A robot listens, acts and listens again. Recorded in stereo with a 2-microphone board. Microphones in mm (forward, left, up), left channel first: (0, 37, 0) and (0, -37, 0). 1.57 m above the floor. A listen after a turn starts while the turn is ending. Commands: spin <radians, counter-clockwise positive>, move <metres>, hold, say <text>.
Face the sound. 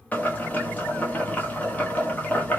spin 0.35
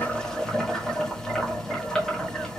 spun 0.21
say Found it: boiling, straight ahead.